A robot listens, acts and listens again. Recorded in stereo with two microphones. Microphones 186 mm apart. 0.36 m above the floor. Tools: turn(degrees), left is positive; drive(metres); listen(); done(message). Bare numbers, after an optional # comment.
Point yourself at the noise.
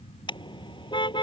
# The car horn: about 25° left or 155° left.
turn(25)
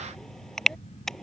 done("Facing the car horn.")